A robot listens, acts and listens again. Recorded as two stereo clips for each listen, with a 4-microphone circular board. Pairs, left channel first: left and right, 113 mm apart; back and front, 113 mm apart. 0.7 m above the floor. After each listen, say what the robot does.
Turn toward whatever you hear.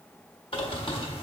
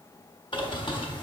Turn 130° left.
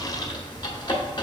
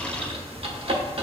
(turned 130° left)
Turn 35° left.
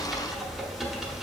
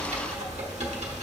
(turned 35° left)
Facing the bird.